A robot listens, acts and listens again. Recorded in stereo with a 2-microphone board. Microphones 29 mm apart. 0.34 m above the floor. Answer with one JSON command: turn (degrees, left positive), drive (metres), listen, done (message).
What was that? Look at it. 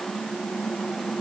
{"listen": true}
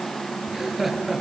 {"turn": -30}
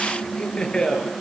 {"turn": 30}
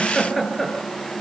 {"turn": 15}
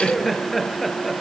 {"done": "Found it: laughter, straight ahead."}